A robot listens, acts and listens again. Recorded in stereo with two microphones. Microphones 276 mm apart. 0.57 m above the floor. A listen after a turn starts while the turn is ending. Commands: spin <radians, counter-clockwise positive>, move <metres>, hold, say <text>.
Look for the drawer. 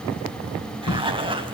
spin 1.31
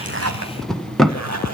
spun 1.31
say Found it: a drawer, straight ahead, 1 to 2 m away.